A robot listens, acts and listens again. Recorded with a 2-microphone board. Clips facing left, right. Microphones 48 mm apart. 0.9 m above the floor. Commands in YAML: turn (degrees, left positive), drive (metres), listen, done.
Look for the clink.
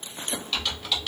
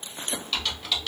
listen: true
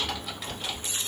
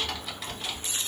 listen: true
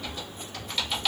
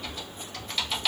done: "I can't make out a clink, only typing on a keyboard."